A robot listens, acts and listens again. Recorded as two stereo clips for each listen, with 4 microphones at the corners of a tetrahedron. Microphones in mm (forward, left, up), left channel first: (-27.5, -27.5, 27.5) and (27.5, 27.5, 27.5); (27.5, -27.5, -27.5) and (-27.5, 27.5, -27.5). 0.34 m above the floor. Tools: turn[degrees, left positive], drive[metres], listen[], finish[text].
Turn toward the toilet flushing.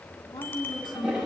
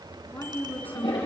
Thought: The toilet flushing: 35° right.
Action: turn[-35]
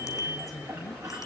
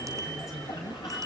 Action: listen[]
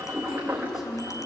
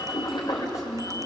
Thought: The toilet flushing is now 20° right.
Action: turn[-20]
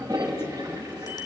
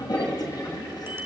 Action: finish[Found it: a toilet flushing, straight ahead, over 4 m away.]